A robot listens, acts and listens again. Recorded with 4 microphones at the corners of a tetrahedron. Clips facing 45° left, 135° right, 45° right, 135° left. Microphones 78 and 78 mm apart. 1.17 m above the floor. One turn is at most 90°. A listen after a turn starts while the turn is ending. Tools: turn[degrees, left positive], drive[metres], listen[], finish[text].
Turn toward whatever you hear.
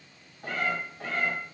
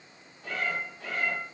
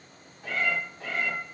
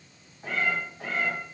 Thought: The cat meowing: 80° left.
Action: turn[80]
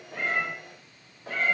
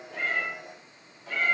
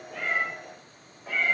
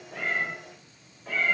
Thought: The cat meowing is now 45° left.
Action: turn[45]
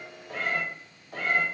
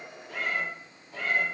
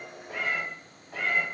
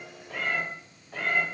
Thought: The cat meowing is now 45° left.
Action: turn[45]
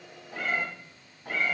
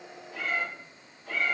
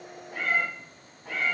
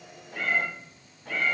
Thought: The cat meowing is now 35° left.
Action: turn[35]
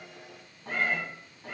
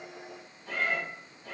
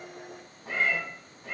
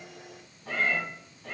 Thought: The cat meowing is now 15° left.
Action: turn[15]
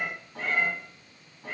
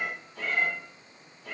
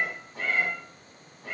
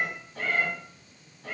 Thought: The cat meowing is now 10° left.
Action: turn[10]
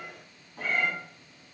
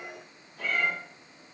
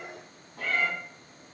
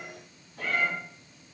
Action: finish[Facing the cat meowing, 2 to 4 m away.]